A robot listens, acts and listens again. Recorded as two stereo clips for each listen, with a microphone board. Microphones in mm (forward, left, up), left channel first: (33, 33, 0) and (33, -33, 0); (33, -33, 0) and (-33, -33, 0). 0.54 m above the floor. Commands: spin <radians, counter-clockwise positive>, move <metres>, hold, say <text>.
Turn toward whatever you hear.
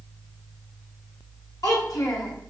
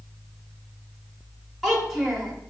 spin 1.57
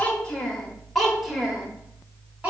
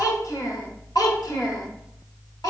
spin -0.35
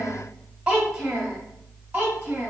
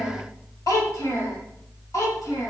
spin -0.35
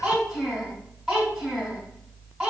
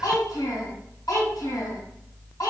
say Facing the child speaking, 2 to 4 m away.